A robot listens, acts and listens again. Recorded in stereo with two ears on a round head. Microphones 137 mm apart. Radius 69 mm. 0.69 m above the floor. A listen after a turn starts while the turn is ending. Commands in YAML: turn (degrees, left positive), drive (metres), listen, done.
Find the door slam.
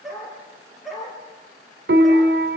listen: true
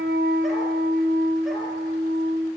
listen: true
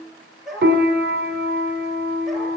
done: "I can't make out a door slam, only a dog barking and a piano."